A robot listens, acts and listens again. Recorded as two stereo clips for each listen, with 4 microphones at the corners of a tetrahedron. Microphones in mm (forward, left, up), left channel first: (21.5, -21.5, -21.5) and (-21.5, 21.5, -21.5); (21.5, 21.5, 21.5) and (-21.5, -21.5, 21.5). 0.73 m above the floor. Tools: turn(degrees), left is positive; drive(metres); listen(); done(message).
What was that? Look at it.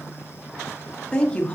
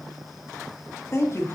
turn(degrees=15)
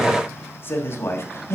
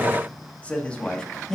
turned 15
turn(degrees=-35)
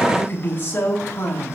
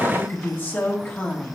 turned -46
turn(degrees=-15)
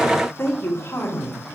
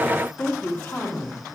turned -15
turn(degrees=-15)
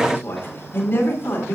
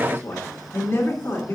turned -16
done("Found it: a man speaking, straight ahead, 2 to 4 m away.")